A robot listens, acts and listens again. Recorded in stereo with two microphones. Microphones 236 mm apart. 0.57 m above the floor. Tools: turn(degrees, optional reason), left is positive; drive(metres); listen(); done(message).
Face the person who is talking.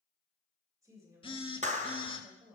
turn(degrees=-30)
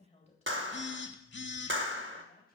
turn(degrees=30, reason="So it is at 30° left.")
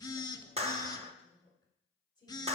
turn(degrees=20, reason="The woman speaking is now 20° left.")
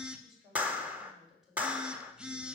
done("Found it: a woman speaking, straight ahead, 2 to 4 m away.")